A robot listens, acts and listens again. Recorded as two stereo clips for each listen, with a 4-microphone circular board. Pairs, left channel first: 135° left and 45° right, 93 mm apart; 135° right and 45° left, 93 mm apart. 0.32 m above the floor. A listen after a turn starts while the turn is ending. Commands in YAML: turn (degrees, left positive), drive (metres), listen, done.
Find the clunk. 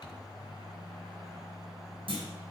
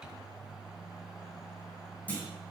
turn: -65
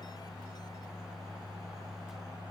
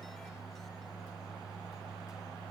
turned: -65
done: "I heard a clunk from this way, but can't make it out now."